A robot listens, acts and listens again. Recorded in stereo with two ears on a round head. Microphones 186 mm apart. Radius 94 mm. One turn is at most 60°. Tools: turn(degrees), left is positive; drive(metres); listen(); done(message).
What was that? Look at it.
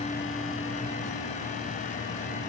listen()
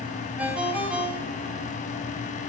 turn(degrees=-30)
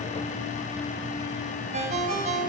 turn(degrees=-60)
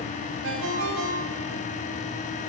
turn(degrees=-60)
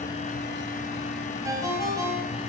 turn(degrees=-15)
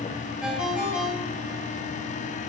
done("Facing the ringtone.")